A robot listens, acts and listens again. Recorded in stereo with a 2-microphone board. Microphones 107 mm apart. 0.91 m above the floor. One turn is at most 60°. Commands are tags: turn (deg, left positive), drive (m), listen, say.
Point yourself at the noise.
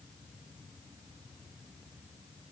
<listen/>
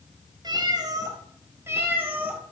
<turn deg="-15"/>
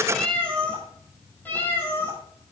<turn deg="20"/>
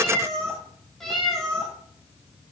<say>Found it: a cat meowing, straight ahead.</say>